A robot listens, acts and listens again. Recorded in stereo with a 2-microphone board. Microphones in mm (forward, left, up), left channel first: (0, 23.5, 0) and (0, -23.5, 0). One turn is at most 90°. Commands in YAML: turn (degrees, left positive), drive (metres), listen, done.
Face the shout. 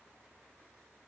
listen: true
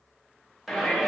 turn: -30
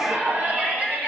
turn: -90
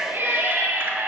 turn: -60
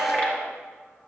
turn: 30
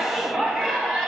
done: "Facing the shout."